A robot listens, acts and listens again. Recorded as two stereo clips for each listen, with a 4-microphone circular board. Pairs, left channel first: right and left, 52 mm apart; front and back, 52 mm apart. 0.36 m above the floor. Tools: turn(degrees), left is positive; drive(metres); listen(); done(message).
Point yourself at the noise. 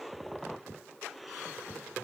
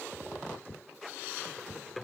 listen()
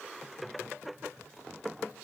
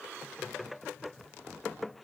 listen()
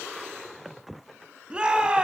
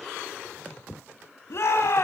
turn(degrees=20)
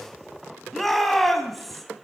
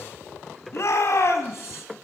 done("Found it: a shout, straight ahead.")